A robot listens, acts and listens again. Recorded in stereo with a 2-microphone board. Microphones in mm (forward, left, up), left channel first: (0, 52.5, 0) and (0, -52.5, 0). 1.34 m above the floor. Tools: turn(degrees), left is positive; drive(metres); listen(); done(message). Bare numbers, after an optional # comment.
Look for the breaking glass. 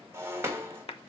# The breaking glass: about 25° right or 155° right.
turn(-25)
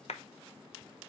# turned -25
listen()
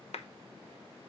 done("I heard breaking glass, but can't make it out now. It was about straight ahead or 130° right.")